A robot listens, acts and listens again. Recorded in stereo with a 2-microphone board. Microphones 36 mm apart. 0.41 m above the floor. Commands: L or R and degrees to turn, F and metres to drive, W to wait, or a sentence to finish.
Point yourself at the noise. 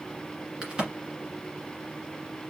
R30
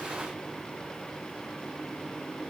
W
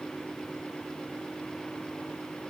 I heard a crack, but can't make it out now. It was about straight ahead or 120° right.